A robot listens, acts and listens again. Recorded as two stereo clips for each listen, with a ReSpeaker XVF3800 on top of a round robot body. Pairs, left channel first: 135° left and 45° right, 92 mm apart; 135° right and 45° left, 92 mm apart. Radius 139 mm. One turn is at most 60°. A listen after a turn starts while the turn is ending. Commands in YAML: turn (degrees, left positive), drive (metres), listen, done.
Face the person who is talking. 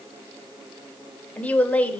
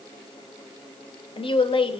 turn: -60
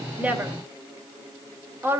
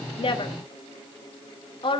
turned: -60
turn: -60
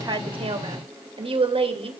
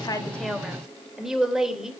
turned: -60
turn: -40
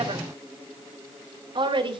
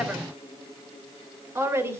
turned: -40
turn: -15
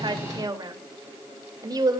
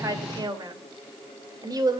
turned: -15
done: "Found it: a woman speaking, straight ahead."